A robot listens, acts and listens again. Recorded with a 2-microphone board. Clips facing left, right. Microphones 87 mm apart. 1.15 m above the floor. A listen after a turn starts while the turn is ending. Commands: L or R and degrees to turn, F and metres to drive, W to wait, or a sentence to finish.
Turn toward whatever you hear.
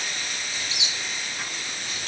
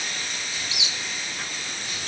L35
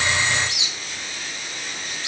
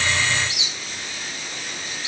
L110
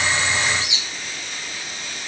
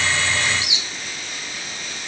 R15
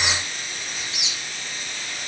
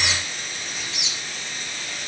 Found it: a squeak, straight ahead, under 1 m away.